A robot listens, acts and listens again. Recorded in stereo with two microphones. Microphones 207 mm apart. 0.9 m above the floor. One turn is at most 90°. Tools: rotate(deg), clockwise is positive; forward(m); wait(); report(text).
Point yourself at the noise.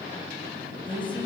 rotate(-25)
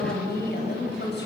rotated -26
rotate(-90)
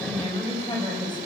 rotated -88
rotate(-20)
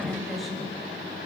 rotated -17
report("Facing the woman speaking.")